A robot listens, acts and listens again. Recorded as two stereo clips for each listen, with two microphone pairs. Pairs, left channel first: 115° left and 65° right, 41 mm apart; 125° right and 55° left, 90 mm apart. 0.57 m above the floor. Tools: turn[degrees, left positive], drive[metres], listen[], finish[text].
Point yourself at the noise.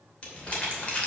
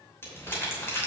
Thought: The crumpling: 175° left.
Action: turn[175]
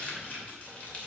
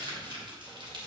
Thought: The crumpling is now 65° left.
Action: turn[65]
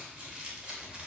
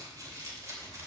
Action: finish[Found it: crumpling, straight ahead, 2 to 4 m away.]